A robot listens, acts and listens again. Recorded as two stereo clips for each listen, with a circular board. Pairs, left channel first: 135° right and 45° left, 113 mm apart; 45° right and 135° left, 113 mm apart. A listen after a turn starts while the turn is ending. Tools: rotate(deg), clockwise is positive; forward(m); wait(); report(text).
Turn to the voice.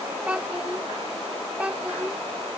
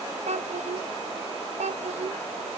rotate(-125)
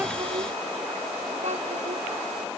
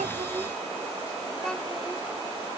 wait()
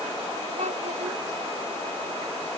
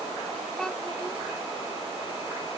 rotate(-40)
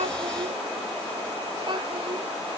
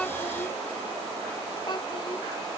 wait()
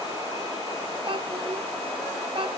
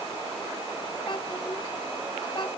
report("Found it: a child speaking, straight ahead.")